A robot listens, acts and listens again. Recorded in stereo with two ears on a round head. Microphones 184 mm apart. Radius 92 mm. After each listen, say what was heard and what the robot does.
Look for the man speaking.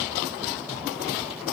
Keep listening.
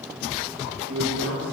Turn 90° right.
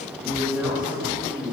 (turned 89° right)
So it is at 10° right. Turn 10° right.
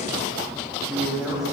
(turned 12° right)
Facing the man speaking.